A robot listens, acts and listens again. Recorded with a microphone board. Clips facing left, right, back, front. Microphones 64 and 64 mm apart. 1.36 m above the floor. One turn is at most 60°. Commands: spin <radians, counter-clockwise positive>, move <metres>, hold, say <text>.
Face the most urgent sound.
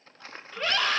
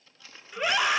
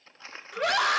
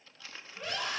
spin -1.05
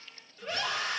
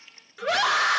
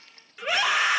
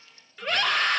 spin -1.05
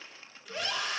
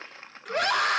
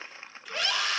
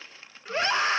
spin -1.05
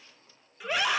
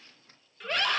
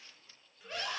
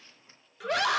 spin 0.17
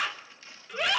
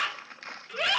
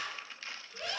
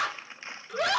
say Facing the scream.